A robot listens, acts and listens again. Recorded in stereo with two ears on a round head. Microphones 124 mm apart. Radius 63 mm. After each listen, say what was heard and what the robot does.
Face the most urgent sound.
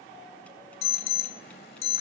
The alarm: about 70° left or 110° left. Turn 70° left.
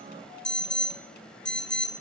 Facing the alarm, 1 to 2 m away.